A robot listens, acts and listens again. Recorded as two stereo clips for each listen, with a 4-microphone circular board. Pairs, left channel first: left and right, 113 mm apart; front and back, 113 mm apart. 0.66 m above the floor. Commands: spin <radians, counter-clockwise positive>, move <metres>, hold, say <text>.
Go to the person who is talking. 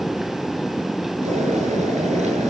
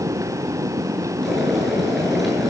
hold
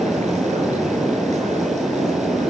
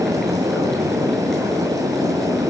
hold
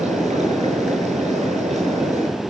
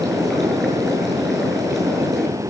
say I can't make out anyone speaking to turn to.